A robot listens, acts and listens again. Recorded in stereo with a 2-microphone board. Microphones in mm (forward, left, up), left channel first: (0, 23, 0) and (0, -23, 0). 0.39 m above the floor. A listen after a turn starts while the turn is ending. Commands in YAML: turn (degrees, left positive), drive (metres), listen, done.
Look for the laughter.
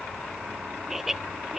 turn: -30
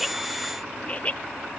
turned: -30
turn: 30
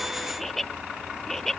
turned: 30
done: "Facing the laughter."